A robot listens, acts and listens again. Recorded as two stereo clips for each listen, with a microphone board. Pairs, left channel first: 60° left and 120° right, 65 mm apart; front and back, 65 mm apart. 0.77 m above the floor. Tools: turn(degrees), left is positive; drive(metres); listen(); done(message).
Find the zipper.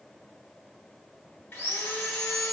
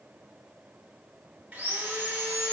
listen()
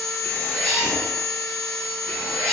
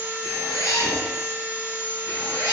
turn(degrees=-15)
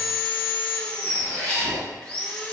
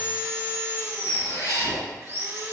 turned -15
done("Found it: a zipper, straight ahead.")